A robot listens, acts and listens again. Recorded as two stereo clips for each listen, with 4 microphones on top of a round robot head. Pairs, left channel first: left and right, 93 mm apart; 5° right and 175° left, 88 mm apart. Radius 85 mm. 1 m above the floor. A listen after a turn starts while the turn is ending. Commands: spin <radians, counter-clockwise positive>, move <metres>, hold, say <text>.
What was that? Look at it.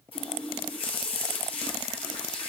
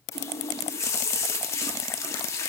spin 0.96
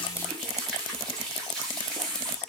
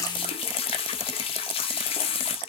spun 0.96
say Found it: a running tap, straight ahead.